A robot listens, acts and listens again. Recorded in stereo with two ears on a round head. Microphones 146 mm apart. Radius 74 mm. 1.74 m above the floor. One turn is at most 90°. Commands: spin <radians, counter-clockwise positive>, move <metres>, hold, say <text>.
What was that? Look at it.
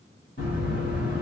spin 0.79
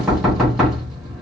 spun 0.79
say Facing the knocking.